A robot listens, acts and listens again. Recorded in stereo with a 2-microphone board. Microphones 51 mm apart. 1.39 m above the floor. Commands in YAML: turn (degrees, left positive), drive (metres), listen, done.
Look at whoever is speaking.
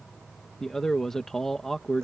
turn: 30
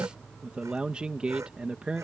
turn: -20
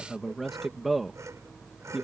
done: "Found it: a man speaking, straight ahead."